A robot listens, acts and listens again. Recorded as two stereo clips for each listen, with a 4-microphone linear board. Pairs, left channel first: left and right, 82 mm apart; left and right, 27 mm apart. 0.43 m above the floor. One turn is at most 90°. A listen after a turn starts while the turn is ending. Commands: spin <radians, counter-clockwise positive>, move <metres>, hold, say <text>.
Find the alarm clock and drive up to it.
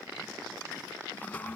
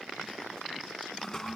hold
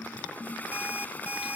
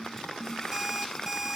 spin -0.35
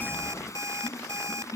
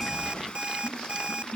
spin -1.57
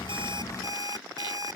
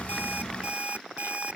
spin -0.87
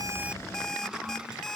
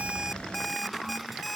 move 1.0
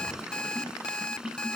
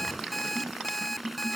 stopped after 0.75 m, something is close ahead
spin 0.17
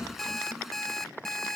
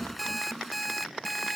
say Blocked. The alarm clock is further on, straight ahead.